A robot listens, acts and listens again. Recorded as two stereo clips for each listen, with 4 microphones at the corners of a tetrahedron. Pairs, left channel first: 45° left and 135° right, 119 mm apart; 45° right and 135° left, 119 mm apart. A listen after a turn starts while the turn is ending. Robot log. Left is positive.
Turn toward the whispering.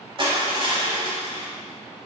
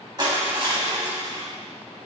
cmd idle
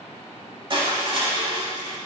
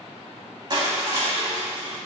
cmd idle
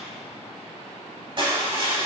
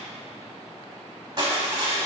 end: I can't make out whispering to turn to.